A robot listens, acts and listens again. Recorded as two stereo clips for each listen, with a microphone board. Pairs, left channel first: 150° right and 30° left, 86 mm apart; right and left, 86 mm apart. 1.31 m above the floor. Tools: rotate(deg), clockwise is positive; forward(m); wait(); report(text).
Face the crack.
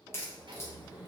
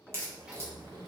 rotate(-150)
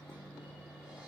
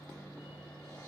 report("Facing where the crack came from. I can't hear it now.")